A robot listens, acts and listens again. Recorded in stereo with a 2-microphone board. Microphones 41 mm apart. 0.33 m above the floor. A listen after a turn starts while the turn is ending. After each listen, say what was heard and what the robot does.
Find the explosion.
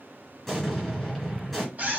Turn 30° left.
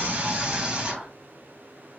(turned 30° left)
Keep listening.
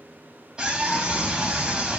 I heard an explosion, but can't make it out now. It was about 30° right or 150° left.